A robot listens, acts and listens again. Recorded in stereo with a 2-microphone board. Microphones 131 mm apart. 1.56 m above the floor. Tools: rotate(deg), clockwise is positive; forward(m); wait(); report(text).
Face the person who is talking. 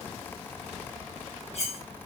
wait()
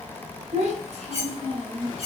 rotate(50)
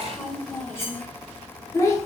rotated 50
rotate(-25)
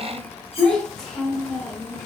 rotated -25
report("Facing the child speaking, 1 to 2 m away.")